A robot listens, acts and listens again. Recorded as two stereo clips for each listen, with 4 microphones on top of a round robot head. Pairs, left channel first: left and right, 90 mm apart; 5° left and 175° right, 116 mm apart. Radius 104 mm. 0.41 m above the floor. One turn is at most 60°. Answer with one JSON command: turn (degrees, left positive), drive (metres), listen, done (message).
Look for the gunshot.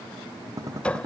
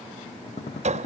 {"turn": -35}
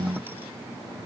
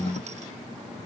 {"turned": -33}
{"done": "Facing where the gunshot came from. I can't hear it now."}